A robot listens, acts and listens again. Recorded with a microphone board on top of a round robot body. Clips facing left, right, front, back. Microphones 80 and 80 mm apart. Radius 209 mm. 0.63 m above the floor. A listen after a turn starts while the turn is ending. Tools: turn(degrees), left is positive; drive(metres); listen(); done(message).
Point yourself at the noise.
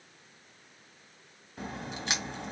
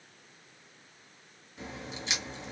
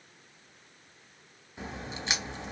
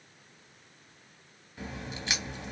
turn(degrees=60)
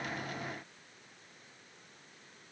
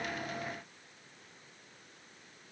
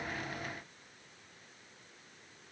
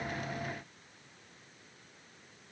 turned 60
done("I heard a crack from this way, but can't make it out now.")